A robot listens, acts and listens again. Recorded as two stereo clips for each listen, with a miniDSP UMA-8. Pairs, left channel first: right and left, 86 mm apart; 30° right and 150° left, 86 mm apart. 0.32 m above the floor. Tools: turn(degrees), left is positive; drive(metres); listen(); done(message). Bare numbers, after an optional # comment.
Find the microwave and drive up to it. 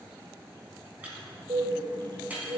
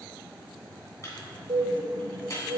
# The microwave: 20° left.
turn(20)
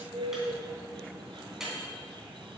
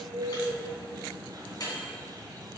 drive(1.0)
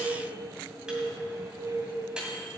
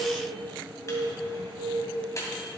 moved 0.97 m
# The microwave is now 15° left.
turn(15)
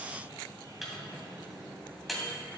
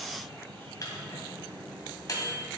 drive(1.0)
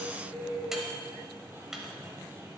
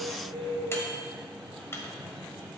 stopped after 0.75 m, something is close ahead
# The microwave is now 10° left.
turn(10)
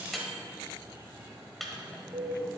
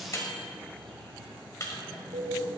done("I am next to the microwave.")